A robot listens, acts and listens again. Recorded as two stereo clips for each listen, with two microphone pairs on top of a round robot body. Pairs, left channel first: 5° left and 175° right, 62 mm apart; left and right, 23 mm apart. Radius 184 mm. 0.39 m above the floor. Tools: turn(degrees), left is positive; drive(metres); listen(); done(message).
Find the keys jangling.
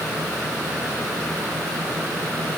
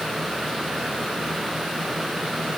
listen()
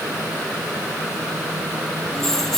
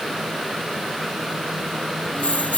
turn(degrees=90)
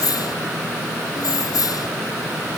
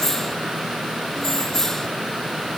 turn(degrees=25)
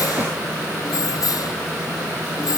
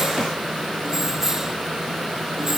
turn(degrees=-15)
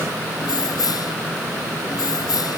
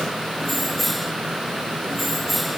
done("Facing the keys jangling.")